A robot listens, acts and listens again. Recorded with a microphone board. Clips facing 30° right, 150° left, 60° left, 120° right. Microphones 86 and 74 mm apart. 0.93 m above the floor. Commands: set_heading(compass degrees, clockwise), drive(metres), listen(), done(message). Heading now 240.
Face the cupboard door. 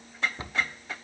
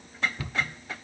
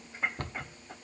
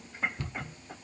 set_heading(215)
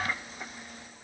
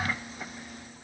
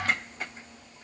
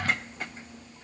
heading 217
done("Facing the cupboard door.")